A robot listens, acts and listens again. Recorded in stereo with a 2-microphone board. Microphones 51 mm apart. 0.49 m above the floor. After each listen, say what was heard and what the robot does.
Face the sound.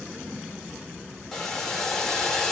Turn 30° left.
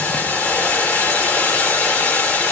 So it is at 140° left. Turn 140° left.
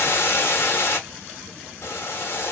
The boiling is now 70° left. Turn 70° left.
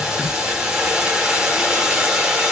The boiling is now 15° right. Turn 15° right.
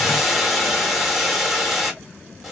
Facing the boiling.